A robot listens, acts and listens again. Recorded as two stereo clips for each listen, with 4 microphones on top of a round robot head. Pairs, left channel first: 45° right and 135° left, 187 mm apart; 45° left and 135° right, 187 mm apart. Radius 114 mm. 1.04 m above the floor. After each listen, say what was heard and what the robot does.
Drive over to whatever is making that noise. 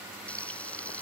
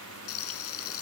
The frying: 35° left. Turn 35° left.
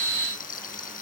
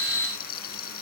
Drive 1.0 m forward.
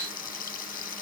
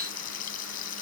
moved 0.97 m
Drive 1.0 m forward.
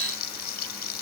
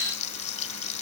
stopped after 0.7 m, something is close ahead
Arrived at the frying, straight ahead.